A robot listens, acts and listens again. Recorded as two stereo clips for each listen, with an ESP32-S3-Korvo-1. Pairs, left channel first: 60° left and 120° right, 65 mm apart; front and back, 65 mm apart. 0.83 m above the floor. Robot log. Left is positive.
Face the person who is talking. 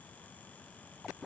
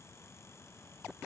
cmd idle
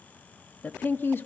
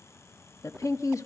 note: The woman speaking: 10° left.
cmd yaw +10
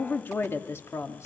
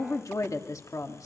note: The woman speaking is now 20° left.
cmd yaw +20
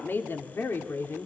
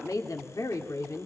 note: The woman speaking is now 15° left.
cmd yaw +15
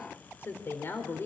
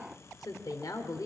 note: The woman speaking is now 10° left.
cmd yaw +10
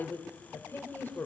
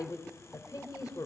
end: Facing the woman speaking.